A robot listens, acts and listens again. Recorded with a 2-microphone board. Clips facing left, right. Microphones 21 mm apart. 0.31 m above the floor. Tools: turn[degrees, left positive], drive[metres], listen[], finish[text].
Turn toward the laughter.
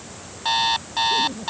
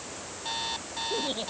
Thought: The laughter: about 65° right or 115° right.
Action: turn[-65]
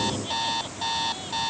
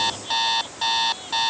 Action: listen[]
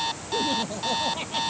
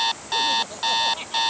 Action: finish[Facing the laughter.]